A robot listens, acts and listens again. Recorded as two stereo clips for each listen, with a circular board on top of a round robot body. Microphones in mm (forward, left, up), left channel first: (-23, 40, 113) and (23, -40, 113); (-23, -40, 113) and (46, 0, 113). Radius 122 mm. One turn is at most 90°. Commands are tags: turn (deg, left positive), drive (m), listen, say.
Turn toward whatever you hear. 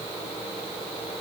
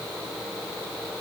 <listen/>
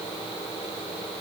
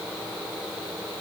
<listen/>
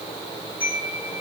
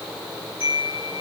<turn deg="-90"/>
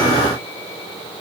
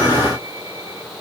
<turn deg="-45"/>
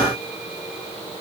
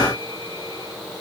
<listen/>
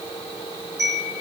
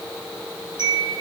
<say>Facing the chime.</say>